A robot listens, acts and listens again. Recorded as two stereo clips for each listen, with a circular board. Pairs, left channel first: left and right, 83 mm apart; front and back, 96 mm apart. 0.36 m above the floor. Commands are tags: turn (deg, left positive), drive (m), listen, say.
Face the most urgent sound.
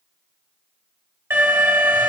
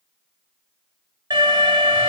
<turn deg="-145"/>
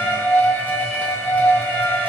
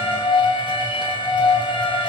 <turn deg="20"/>
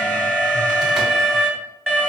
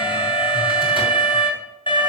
<say>Found it: an alarm, straight ahead, 2 to 4 m away.</say>